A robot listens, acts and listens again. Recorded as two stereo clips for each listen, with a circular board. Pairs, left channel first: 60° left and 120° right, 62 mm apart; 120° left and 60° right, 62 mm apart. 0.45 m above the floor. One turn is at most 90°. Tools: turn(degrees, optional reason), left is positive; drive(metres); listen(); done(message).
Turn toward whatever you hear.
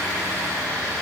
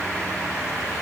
listen()
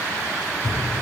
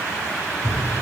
turn(degrees=90, reason="The thud: 105° left.")
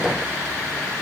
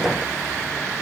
turn(degrees=15, reason="Nothing new. It was at 15° left.")
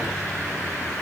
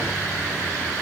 done("Facing where the thud came from. I can't hear it now.")